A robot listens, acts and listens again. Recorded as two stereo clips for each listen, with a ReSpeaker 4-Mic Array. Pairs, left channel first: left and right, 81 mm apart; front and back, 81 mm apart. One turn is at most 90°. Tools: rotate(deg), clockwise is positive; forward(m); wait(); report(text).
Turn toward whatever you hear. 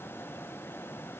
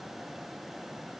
wait()
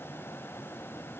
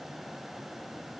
wait()
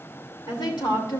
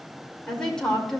rotate(-85)
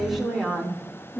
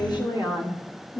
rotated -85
rotate(-10)
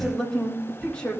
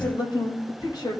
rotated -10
rotate(-20)
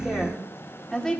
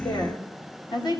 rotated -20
report("Found it: a woman speaking, straight ahead.")